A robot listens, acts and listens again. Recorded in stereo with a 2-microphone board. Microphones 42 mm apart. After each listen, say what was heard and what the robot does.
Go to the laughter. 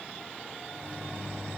Keep listening.
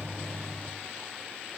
Keep listening.
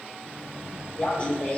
The laughter: about 30° left or 150° left. Turn 30° left.
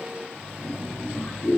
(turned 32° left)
So it is at 120° left. Turn 120° left.
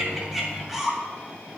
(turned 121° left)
Drive 1.0 m forward.
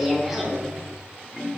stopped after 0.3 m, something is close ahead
Something is in my way. I am facing the laughter but have not reached it.